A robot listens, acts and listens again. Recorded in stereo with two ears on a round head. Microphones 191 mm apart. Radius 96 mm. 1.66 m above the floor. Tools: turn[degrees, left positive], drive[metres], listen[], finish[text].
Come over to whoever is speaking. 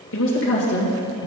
Thought: The woman speaking: about 65° left or 115° left.
Action: turn[65]
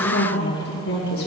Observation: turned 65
Thought: So it is at 50° left.
Action: turn[50]
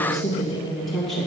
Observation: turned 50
Action: drive[1.0]
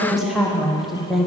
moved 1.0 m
Action: drive[1.0]
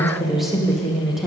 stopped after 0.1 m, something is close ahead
Action: finish[I am next to the woman speaking.]